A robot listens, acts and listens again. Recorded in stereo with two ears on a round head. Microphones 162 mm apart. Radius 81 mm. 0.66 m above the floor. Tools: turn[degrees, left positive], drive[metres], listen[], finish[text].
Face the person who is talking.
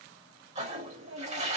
Action: turn[-90]
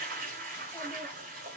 Action: listen[]
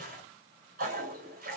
Action: listen[]
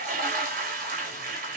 Action: finish[Facing where the child speaking came from. I can't hear it now.]